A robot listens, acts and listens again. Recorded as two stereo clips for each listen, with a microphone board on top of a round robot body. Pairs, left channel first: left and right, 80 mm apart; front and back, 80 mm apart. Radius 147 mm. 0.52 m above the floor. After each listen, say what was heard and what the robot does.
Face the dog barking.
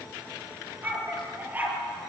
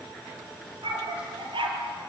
The dog barking: 160° right. Turn 160° right.
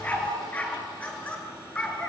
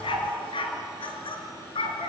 The dog barking is now 15° left. Turn 15° left.
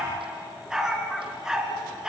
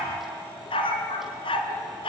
Found it: a dog barking, straight ahead, 2 to 4 m away.